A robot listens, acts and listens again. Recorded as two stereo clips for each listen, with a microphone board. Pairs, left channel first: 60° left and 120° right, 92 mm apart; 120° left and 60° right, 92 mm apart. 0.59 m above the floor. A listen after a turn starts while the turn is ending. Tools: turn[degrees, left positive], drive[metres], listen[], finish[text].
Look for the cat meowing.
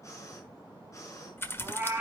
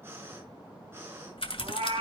Thought: The cat meowing: 50° right.
Action: turn[-50]
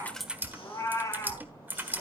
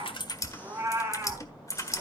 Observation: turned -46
Action: finish[Found it: a cat meowing, straight ahead.]